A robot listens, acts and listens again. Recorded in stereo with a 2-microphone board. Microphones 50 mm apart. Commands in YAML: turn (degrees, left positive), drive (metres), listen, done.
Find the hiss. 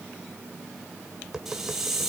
turn: -30
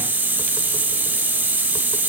turn: -145
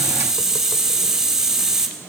turn: -15
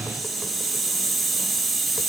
done: "Facing the hiss, 2 to 4 m away."